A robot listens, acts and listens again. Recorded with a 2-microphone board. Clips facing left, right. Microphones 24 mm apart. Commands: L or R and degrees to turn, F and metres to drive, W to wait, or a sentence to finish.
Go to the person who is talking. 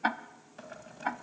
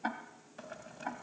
W
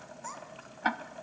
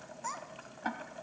R15
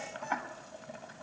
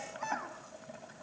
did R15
R150
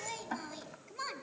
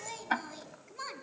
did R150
F1.0
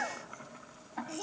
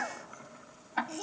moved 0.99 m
F1.0
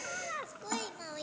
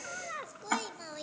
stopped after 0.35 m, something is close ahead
Arrived at the child speaking, straight ahead.